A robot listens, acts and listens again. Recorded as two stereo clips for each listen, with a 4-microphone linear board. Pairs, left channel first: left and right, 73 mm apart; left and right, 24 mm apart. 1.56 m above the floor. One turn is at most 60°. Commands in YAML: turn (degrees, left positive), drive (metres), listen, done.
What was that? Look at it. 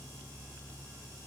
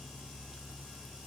listen: true
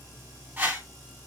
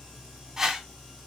turn: -20
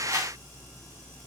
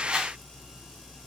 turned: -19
turn: -60
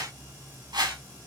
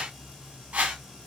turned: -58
turn: -60
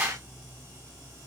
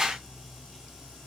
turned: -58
turn: -20
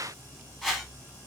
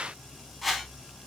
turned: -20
done: "Found it: a whoosh, straight ahead, 1 to 2 m away."